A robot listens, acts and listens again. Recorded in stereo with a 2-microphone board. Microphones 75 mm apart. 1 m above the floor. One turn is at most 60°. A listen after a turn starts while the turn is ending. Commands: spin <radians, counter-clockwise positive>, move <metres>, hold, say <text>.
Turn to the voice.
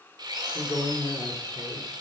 spin 0.79
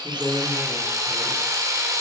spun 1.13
hold
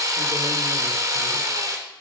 hold
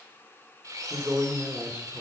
spin -0.35
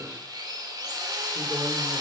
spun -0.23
hold
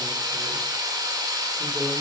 hold
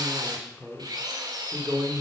say Facing the man speaking, 2 to 4 m away.